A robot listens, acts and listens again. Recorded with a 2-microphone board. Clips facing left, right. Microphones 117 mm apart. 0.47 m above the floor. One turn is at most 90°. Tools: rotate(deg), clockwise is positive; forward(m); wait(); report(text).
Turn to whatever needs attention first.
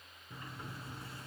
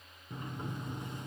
wait()
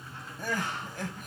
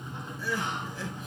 rotate(-65)
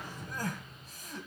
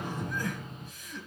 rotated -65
rotate(-45)
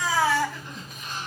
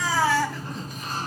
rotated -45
report("Found it: crying, straight ahead.")